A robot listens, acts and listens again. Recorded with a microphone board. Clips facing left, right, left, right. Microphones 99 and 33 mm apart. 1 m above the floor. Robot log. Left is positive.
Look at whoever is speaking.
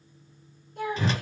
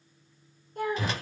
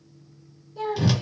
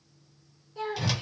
note: The child speaking: about 45° right or 135° right.
cmd yaw -45
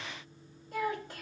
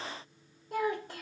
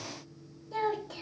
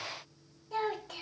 note: So it is at 90° right.
cmd yaw -90
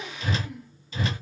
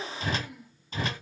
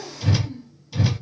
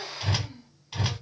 end: Found it: a child speaking, straight ahead.